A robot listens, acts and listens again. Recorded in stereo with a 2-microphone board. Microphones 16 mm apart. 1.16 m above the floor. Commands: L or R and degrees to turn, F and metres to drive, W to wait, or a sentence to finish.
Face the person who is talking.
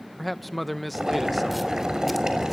L30
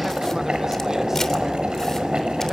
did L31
W
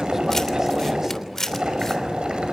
W
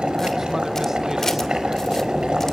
I heard a man speaking, but can't make it out now. It was about 30° right or 145° left.